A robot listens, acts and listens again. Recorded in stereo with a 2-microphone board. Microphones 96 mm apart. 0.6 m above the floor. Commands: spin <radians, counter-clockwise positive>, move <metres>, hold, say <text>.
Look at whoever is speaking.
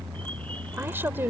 spin -0.44
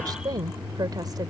spin -2.27
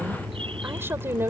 spin -0.44
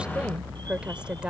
spin -0.17
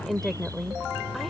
say Found it: a woman speaking, straight ahead.